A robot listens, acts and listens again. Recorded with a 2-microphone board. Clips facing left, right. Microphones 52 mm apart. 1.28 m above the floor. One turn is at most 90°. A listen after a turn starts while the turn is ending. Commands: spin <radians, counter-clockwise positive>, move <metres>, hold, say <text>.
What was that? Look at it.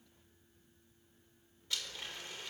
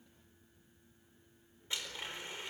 spin -0.35
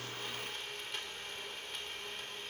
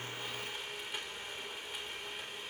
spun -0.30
say Found it: a blender, straight ahead.